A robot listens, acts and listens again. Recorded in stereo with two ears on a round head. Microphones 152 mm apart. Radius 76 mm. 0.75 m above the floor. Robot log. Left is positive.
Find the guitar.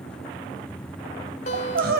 note: The guitar: about 40° left or 140° left.
cmd yaw +40
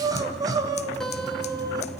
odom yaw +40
end: Facing the guitar, 2 to 4 m away.